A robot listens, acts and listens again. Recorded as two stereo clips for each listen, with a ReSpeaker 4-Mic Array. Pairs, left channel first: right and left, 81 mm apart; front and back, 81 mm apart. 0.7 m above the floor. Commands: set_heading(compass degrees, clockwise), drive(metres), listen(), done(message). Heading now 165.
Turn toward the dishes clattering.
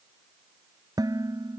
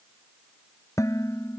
set_heading(115)
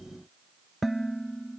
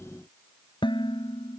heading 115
done("Found it: dishes clattering, straight ahead.")